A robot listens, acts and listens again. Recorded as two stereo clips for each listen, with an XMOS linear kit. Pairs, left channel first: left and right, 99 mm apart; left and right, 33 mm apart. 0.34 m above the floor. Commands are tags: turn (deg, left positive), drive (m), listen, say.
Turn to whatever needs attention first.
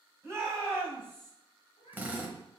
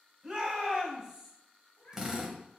<turn deg="-25"/>
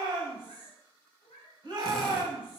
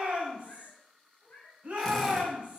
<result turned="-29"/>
<turn deg="-125"/>
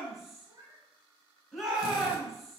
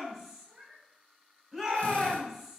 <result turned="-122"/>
<say>Found it: a shout, straight ahead.</say>